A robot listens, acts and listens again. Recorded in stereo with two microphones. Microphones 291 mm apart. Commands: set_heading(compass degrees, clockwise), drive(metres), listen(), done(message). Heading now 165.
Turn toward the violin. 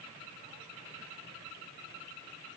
listen()
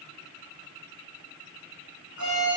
set_heading(255)
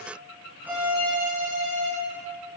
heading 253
done("Facing the violin, 2 to 4 m away.")